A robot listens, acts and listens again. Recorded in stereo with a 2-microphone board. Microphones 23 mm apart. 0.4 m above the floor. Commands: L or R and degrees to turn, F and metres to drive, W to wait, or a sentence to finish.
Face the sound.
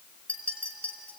L70
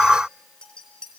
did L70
L35
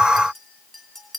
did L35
Facing the clink.